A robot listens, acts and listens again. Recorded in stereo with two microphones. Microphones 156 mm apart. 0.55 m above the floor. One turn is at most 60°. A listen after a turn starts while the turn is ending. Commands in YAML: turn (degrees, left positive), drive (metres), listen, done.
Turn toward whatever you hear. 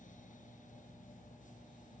listen: true
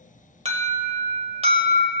turn: -45
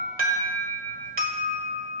turn: -60
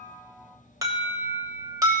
turn: -25
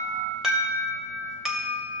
done: "Found it: an alarm, straight ahead."